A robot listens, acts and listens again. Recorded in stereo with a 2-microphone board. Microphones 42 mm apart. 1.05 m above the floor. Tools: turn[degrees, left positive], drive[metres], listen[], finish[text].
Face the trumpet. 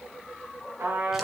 Thought: The trumpet: about 75° right or 105° right.
Action: turn[-75]
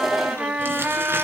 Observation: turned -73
Thought: So it is at 30° right.
Action: turn[-30]
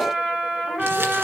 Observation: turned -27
Action: finish[Facing the trumpet, over 4 m away.]